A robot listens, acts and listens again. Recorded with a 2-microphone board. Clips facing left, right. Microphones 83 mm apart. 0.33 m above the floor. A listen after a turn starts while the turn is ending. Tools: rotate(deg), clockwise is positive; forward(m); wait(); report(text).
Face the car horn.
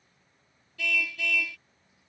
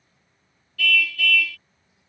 rotate(-20)
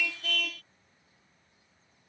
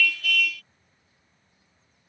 rotate(-140)
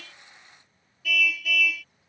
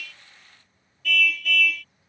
report("Facing the car horn.")